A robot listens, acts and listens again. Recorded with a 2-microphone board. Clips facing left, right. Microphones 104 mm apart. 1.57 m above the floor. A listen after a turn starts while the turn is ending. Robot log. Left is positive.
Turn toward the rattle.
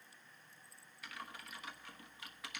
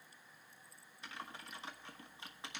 cmd idle
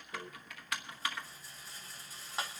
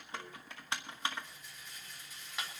note: The rattle: about 35° left or 145° left.
cmd yaw +35
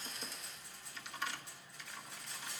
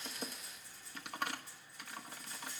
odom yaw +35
note: So it is at 110° left.
cmd yaw +110
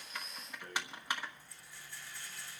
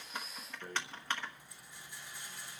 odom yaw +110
note: The rattle is now 15° right.
cmd yaw -15
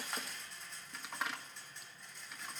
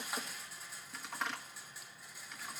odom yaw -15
end: Found it: a rattle, straight ahead.